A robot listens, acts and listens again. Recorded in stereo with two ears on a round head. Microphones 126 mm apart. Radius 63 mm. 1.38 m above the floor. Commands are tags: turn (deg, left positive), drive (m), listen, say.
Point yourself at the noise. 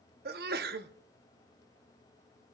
<turn deg="-75"/>
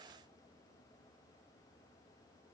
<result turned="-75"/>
<listen/>
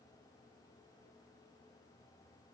<say>I heard a sneeze, but can't make it out now. It was about straight ahead or 30° right.</say>